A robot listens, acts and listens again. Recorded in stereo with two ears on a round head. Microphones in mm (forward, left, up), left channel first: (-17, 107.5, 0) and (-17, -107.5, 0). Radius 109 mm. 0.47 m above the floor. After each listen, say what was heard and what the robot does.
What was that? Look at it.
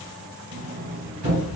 The sliding door: about 60° right or 120° right. Turn 60° right.
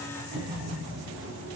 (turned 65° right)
So it is at 55° right. Turn 55° right.
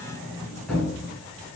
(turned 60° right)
Found it: a sliding door, straight ahead.